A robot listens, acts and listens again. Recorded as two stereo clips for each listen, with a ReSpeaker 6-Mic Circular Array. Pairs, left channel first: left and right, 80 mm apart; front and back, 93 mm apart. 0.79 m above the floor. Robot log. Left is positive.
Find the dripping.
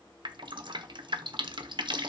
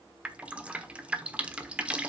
note: The dripping: 105° right.
cmd yaw -105
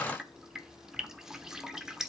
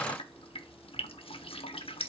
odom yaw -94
end: Found it: dripping, straight ahead, 1 to 2 m away.